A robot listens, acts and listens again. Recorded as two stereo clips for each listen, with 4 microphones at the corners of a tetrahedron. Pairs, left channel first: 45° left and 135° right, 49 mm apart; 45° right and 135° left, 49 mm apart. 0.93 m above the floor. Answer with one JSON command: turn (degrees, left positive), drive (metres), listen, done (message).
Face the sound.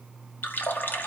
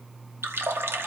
{"turn": 95}
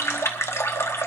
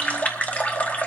{"turn": 15}
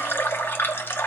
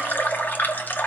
{"done": "Found it: a running tap, straight ahead, 1 to 2 m away."}